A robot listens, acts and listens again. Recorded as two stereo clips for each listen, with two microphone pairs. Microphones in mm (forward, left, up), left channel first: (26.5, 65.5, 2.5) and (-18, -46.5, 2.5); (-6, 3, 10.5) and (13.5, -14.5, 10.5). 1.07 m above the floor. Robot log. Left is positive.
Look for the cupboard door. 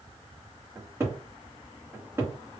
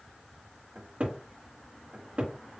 note: The cupboard door: 45° right.
cmd yaw -45
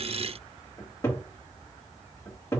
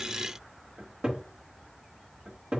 end: Found it: a cupboard door, straight ahead, 1 to 2 m away.